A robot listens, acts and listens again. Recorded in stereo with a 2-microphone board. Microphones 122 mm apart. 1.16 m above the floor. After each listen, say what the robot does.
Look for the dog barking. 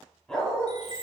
Turn 30° left.
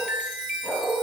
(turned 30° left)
Turn 30° left.
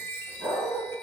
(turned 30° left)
Turn 20° right.
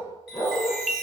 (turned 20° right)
Turn 15° left.
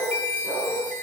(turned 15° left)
Turn 10° left.
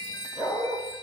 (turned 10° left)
Found it: a dog barking, straight ahead.